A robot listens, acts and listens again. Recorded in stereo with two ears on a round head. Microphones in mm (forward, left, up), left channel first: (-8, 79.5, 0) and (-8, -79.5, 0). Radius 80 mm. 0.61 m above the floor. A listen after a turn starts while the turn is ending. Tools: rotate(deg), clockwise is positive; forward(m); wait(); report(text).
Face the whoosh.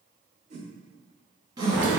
rotate(45)
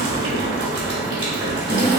wait()
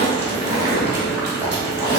wait()
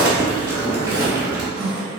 report("I heard a whoosh, but can't make it out now. It was about straight ahead or 90° right.")